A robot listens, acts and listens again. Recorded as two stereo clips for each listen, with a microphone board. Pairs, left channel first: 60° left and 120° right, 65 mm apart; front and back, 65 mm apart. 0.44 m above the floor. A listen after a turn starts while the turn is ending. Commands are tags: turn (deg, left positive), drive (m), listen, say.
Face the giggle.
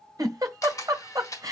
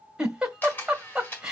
<turn deg="-105"/>
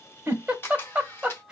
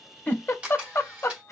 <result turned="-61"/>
<turn deg="-45"/>
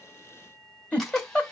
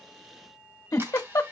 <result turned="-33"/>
<turn deg="-10"/>
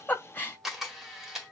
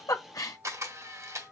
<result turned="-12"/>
<say>Found it: a giggle, straight ahead.</say>